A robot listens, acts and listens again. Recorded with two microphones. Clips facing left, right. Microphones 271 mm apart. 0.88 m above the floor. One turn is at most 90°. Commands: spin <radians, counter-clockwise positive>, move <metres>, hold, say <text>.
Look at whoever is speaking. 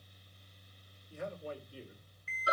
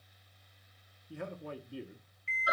spin -1.13
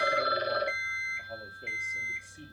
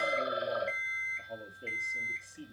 say Facing the man speaking.